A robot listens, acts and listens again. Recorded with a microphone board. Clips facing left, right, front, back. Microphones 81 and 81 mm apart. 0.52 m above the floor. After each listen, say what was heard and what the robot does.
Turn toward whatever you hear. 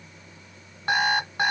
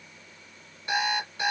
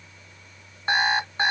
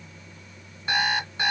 The alarm clock: 55° left. Turn 55° left.
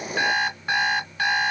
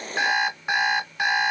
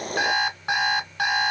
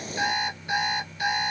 The alarm clock is now 10° right. Turn 10° right.
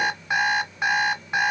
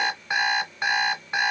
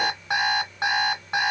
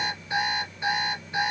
Facing the alarm clock.